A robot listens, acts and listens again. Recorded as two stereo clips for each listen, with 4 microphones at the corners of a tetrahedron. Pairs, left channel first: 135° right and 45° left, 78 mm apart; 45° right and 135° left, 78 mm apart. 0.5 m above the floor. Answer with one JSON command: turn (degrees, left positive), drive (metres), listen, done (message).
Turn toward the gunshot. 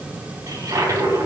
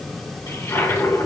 {"listen": true}
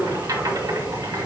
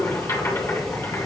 {"listen": true}
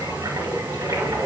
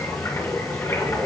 {"done": "I can't make out a gunshot, only a toilet flushing."}